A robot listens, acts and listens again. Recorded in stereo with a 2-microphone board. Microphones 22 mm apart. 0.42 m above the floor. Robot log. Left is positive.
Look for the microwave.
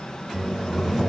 note: The microwave: about 20° right or 160° right.
cmd yaw -20
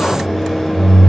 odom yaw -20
end: Facing the microwave, 1 to 2 m away.